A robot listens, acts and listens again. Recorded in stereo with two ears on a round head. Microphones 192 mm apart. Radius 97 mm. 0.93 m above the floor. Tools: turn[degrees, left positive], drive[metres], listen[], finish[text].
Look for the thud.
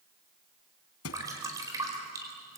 Thought: The thud: about 75° left or 105° left.
Action: turn[75]
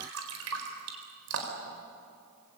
Action: listen[]
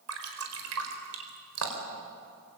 Action: finish[I heard a thud, but can't make it out now. It was about straight ahead or 30° left.]